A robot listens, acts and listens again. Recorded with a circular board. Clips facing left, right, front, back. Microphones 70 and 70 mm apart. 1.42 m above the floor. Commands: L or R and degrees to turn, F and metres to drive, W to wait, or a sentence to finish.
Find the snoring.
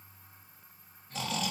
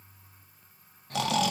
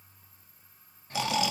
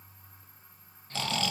R75
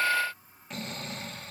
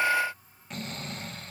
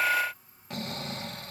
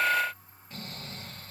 Found it: snoring, straight ahead, 1 to 2 m away.